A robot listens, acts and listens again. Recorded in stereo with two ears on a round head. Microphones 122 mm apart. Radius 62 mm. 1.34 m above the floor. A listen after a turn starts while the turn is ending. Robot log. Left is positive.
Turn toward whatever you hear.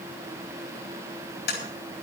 cmd yaw +90
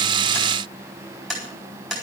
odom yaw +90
end: Found it: tapping, straight ahead, over 4 m away.